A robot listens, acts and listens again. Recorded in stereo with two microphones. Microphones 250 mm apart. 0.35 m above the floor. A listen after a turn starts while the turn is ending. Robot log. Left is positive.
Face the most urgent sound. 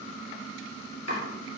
cmd idle
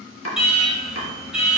cmd yaw -30
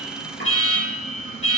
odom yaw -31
note: So it is at 30° left.
cmd yaw +30
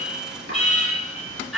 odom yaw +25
end: Facing the alarm, over 4 m away.